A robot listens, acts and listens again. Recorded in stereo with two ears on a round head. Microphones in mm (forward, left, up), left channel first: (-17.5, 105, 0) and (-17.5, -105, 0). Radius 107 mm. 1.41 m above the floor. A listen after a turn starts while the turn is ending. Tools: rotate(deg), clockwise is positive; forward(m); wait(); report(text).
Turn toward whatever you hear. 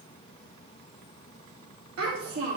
rotate(90)
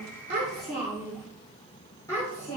rotate(-20)
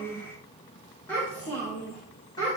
rotate(-20)
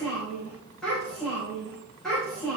report("Facing the child speaking.")